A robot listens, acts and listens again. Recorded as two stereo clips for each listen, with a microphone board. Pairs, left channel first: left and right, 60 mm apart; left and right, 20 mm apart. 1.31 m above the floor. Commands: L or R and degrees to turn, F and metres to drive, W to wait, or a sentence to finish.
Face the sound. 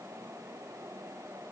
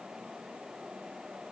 W
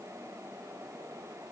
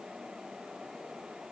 W
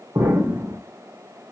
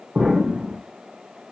R60
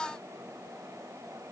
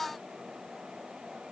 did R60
W
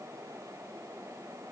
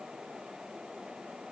I heard an explosion, but can't make it out now. It was about straight ahead or 60° right.